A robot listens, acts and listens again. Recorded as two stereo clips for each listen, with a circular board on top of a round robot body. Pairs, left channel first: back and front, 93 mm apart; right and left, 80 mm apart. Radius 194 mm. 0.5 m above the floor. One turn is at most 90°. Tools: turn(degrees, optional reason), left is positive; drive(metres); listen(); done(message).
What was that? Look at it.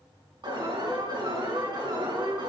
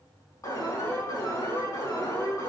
turn(degrees=-40, reason="The alarm: 40° right.")
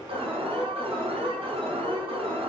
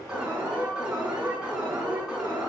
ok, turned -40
turn(degrees=10, reason="The alarm is now 10° left.")
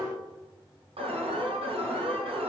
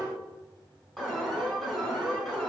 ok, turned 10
done("Found it: an alarm, straight ahead.")